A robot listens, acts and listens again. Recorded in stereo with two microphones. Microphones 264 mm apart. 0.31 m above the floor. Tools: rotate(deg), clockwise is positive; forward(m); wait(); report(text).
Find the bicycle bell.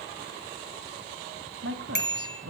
rotate(-40)
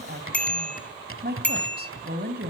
report("Facing the bicycle bell, 2 to 4 m away.")